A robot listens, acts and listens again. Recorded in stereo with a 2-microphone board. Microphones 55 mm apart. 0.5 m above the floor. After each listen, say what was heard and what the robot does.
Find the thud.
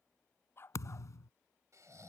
The thud: about 75° left or 105° left. Turn 75° left.
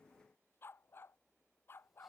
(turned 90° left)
Keep listening.
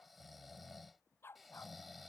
I heard a thud, but can't make it out now. It was about 15° right or 15° left.